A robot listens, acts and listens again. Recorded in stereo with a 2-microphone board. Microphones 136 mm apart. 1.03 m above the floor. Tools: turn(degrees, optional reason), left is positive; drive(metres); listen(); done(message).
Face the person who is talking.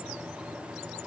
listen()
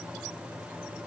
listen()
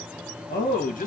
turn(degrees=65, reason="The man speaking: about 65° left or 115° left.")
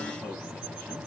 listen()
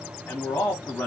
turn(degrees=10, reason="So it is at 10° left.")
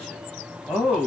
done("Facing the man speaking, 1 to 2 m away.")